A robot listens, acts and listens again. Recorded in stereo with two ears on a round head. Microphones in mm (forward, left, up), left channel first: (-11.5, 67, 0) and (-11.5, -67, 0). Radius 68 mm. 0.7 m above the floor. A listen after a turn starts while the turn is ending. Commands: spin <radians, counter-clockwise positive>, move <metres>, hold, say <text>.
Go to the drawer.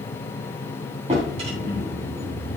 spin -0.70
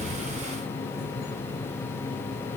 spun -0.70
hold
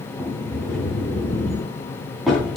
move 1.0
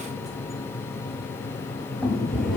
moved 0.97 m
move 1.0
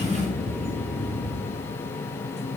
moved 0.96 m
move 1.0
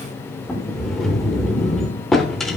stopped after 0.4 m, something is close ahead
say I am next to the drawer.